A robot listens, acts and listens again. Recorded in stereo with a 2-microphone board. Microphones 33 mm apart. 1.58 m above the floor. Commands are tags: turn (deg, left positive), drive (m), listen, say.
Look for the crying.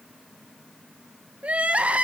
<turn deg="-45"/>
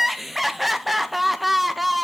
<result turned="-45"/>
<say>Facing the crying, under 1 m away.</say>